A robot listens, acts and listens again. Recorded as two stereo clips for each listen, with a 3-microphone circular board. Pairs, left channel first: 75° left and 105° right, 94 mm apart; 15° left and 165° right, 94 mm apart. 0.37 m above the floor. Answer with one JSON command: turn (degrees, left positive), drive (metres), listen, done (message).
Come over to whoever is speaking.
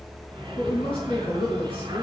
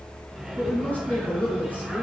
{"turn": 85}
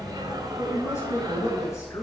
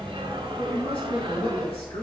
{"turn": 20}
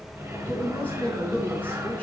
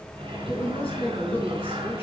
{"drive": 1.0}
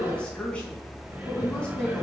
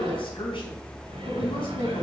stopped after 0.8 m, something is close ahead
{"done": "Something is in my way. I am facing the woman speaking but have not reached it."}